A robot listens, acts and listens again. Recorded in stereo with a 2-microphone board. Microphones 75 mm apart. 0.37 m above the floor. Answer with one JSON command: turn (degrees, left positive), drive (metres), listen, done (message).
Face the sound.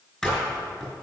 {"turn": 30}
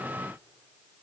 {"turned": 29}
{"listen": true}
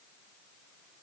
{"done": "I heard a door slam, but can't make it out now. It was about 25° right or 150° left."}